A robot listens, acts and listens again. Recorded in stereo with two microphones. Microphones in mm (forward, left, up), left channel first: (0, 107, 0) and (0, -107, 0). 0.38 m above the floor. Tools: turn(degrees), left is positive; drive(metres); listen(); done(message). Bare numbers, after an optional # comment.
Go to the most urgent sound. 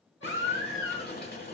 turn(90)
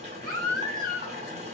drive(1.0)
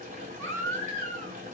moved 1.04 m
# The baby crying is now 15° left.
turn(15)
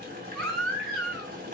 drive(1.0)
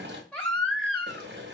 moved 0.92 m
drive(1.0)
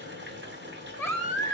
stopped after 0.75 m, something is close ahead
# The baby crying is now 20° left.
turn(20)
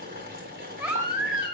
done("I am next to the baby crying.")